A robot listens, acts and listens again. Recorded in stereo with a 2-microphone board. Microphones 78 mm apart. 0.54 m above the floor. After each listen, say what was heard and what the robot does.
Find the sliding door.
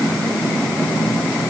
Keep listening.
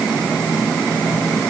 Keep listening.
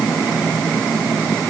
I can't make out a sliding door to turn to.